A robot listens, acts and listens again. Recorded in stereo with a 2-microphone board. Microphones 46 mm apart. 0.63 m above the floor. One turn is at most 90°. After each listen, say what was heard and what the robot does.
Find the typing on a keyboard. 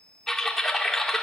Turn 30° left.
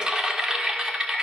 So it is at 20° right. Turn 20° right.
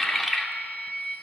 Facing the typing on a keyboard.